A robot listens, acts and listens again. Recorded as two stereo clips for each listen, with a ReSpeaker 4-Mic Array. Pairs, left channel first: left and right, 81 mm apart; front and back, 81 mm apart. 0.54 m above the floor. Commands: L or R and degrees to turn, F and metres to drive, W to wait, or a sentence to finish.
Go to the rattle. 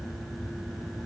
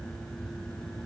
W
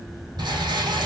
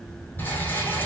R65
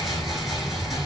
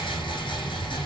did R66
F1.0
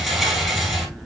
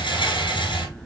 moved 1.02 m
F1.0
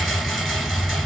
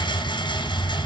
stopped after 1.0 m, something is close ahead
Arrived at the rattle, straight ahead.